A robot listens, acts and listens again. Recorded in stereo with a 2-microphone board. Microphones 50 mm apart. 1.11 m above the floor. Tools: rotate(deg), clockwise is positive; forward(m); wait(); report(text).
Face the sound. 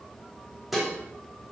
rotate(30)
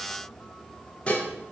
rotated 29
rotate(-25)
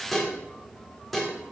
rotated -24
report("Found it: dishes clattering, straight ahead, 1 to 2 m away.")